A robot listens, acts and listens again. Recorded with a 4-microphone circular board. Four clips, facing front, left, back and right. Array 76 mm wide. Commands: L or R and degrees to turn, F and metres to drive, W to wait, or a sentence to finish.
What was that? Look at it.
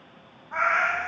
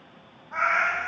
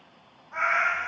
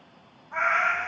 L30
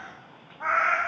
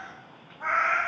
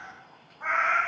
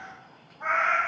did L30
L15
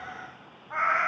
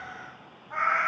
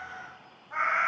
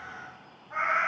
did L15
L15
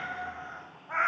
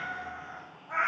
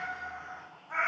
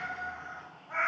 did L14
L10
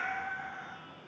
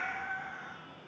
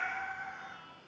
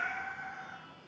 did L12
Found it: a cat meowing, straight ahead.